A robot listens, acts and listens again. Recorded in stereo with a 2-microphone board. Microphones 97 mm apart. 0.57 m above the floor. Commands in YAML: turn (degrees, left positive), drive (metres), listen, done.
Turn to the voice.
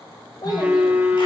turn: 45
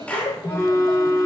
turn: 90
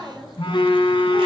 done: "Facing the child speaking, 1 to 2 m away."